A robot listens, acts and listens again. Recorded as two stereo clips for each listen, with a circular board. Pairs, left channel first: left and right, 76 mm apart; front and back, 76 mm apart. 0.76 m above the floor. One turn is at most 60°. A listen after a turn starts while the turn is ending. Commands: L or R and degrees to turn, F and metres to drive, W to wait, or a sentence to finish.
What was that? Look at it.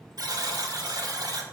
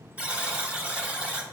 R60
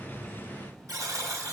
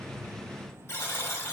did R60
R55
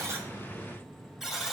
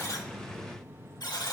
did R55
Facing the buzzer.